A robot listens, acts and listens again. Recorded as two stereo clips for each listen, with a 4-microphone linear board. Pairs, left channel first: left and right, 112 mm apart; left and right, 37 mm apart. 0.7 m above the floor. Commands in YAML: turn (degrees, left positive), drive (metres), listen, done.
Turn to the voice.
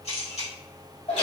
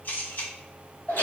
listen: true
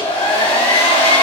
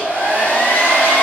listen: true
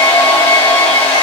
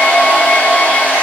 done: "I can't make out anyone speaking to turn to."